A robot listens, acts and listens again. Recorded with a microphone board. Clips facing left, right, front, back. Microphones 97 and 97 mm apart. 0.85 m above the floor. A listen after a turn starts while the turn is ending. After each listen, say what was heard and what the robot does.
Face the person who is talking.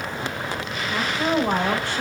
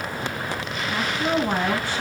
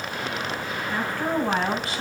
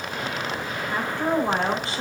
The woman speaking: 115° left. Turn 115° left.
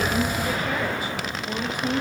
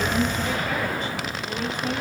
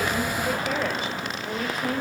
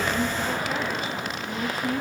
The woman speaking is now 15° left. Turn 15° left.
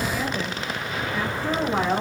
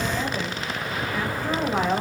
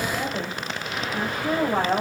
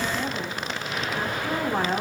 Found it: a woman speaking, straight ahead.